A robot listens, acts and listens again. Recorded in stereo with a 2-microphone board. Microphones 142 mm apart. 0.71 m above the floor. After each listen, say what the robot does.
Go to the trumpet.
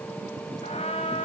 Turn 45° left.
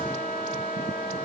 Turn 90° left.
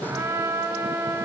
Turn 20° right.
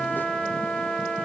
Drive 1.0 m forward.
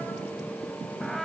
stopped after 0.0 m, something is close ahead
Blocked. The trumpet is further on, straight ahead.